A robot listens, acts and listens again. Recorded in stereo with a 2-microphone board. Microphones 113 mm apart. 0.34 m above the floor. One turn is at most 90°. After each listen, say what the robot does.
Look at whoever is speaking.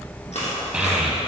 Turn 30° right.
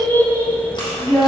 Turn 25° left.
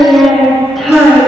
Facing the child speaking.